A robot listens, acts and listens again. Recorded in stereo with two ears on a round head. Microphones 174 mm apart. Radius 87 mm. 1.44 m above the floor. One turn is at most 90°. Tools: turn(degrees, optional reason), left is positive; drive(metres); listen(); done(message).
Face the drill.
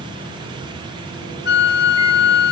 listen()
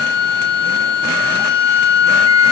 listen()
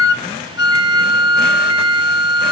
done("I can't make out a drill, only a flute.")